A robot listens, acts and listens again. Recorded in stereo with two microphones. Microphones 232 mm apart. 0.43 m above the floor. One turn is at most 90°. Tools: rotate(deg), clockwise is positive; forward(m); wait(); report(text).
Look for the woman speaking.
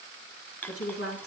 rotate(-75)
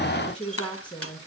report("Facing the woman speaking.")